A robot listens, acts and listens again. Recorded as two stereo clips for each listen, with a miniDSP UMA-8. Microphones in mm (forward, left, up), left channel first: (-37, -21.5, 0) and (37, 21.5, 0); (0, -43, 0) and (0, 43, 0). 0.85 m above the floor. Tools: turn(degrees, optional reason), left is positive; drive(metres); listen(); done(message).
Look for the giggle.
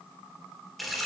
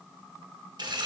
listen()
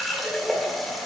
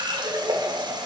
listen()
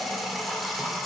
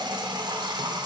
done("I can't make out a giggle to turn to.")